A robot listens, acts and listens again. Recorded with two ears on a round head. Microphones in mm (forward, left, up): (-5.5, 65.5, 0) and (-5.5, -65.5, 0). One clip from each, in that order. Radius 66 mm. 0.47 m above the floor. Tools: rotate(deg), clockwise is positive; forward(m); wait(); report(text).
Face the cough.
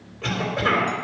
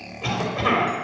rotate(-30)
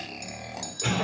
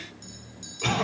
rotate(25)
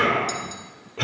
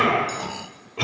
rotate(15)
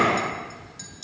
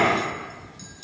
report("Facing the cough, 2 to 4 m away.")